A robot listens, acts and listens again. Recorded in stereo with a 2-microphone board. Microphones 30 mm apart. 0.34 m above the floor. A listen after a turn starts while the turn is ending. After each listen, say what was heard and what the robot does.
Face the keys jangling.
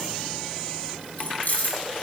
The keys jangling: about 65° left or 115° left. Turn 65° left.
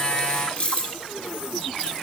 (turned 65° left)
So it is at 40° left. Turn 40° left.
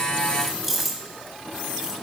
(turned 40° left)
The keys jangling is now 10° right. Turn 10° right.
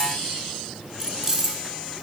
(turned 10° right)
The keys jangling is now 20° right. Turn 20° right.
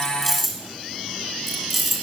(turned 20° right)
Facing the keys jangling, 2 to 4 m away.